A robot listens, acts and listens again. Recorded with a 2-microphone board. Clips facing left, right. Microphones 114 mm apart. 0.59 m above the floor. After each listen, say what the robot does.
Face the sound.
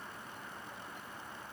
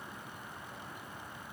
Keep listening.
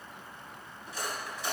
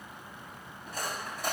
Turn 55° right.
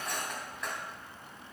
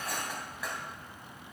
Found it: cutlery clinking, straight ahead.